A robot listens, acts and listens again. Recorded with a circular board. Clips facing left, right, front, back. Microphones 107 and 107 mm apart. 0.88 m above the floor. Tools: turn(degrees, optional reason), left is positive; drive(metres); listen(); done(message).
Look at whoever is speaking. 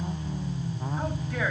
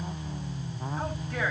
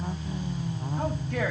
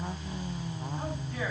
done("Found it: a man speaking, straight ahead.")